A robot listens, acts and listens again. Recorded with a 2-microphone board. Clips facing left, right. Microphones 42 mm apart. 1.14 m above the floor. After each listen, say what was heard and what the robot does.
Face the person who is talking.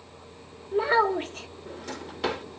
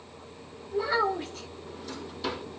The child speaking: about 45° left or 135° left. Turn 45° left.
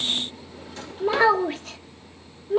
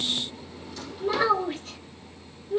So it is at 90° left. Turn 90° left.
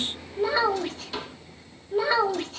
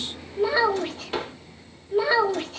Found it: a child speaking, straight ahead, 1 to 2 m away.